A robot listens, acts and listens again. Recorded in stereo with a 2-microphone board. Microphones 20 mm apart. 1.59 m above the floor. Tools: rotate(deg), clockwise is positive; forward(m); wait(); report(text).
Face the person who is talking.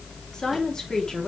rotate(-35)
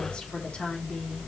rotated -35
rotate(-105)
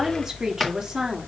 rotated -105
rotate(25)
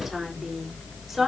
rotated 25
report("Found it: a woman speaking, straight ahead.")